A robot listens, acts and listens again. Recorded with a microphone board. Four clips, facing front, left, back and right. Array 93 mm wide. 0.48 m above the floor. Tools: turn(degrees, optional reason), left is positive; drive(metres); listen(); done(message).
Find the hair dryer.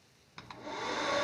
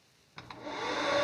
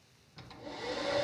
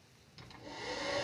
turn(degrees=55, reason="The hair dryer: 55° left.")
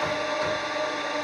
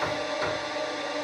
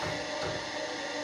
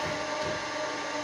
done("Found it: a hair dryer, straight ahead, 1 to 2 m away.")